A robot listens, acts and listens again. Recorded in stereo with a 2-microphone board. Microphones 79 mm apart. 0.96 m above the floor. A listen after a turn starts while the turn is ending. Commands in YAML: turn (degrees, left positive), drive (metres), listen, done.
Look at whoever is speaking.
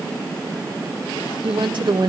turn: -70
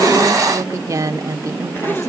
turn: -40
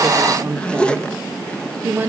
turn: -25
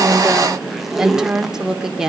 done: "Found it: a woman speaking, straight ahead, 2 to 4 m away."